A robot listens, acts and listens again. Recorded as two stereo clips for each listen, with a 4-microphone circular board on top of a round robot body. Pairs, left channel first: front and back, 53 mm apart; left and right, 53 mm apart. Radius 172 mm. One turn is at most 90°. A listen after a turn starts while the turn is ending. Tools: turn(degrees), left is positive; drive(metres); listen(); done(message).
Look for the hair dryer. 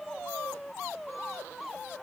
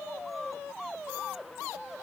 listen()
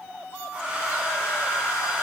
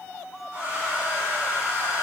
turn(degrees=-90)
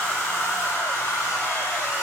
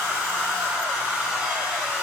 turn(degrees=-25)
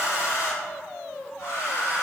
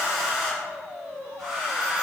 turn(degrees=-10)
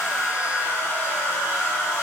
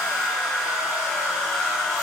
done("Found it: a hair dryer, straight ahead.")